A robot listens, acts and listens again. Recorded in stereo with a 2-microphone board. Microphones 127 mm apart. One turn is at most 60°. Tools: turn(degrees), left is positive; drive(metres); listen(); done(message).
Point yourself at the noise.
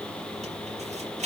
turn(degrees=-60)
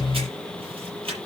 turn(degrees=-50)
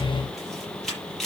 done("Found it: a camera shutter, straight ahead.")